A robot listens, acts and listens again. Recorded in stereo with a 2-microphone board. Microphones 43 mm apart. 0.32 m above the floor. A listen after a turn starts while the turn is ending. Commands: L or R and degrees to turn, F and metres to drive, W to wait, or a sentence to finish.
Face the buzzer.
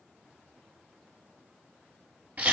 W
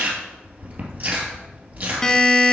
L15
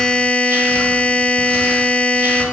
L150
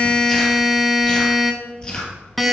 Facing the buzzer.